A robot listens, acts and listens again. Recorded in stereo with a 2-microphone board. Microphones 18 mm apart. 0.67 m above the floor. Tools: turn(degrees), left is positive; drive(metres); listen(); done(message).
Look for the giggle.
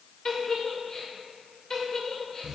turn(degrees=30)
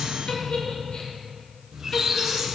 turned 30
turn(degrees=115)
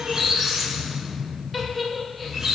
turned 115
done("Facing the giggle.")